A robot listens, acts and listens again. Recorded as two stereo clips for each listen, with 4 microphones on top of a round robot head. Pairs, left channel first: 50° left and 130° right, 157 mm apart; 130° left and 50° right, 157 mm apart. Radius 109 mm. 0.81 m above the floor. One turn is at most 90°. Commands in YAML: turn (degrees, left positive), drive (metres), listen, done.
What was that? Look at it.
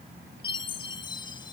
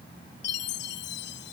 turn: 90
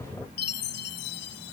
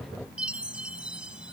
turn: 30
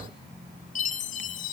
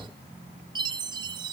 turn: 10
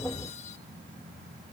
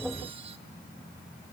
listen: true
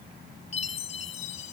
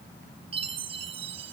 done: "Found it: a chime, straight ahead."